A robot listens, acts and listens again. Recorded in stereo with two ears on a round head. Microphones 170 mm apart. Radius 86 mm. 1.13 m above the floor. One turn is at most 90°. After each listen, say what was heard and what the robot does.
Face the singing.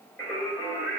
The singing: about 20° left or 160° left. Turn 20° left.
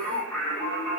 Turn 30° left.
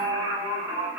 So it is at 10° right. Turn 10° right.
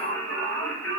The singing is now 15° left. Turn 15° left.
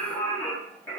The singing is now 15° left. Turn 15° left.
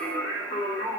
The singing is now 20° left. Turn 20° left.
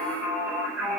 Found it: singing, straight ahead.